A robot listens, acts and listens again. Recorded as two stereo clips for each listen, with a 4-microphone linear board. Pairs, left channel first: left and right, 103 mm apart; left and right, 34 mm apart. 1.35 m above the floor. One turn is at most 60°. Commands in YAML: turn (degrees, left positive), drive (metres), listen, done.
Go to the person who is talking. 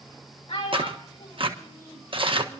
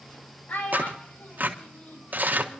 turn: 60
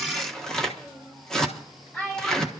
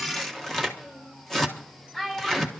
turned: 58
turn: 15
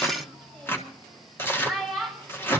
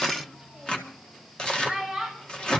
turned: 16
drive: 1.0
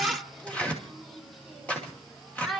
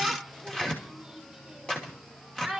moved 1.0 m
drive: 1.0
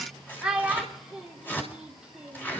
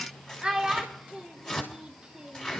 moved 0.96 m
turn: -10
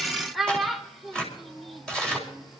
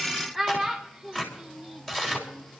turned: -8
drive: 1.0
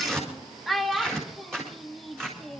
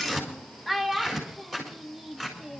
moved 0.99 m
drive: 1.0
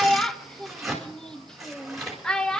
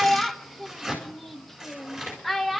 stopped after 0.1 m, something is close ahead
done: "I am next to the child speaking."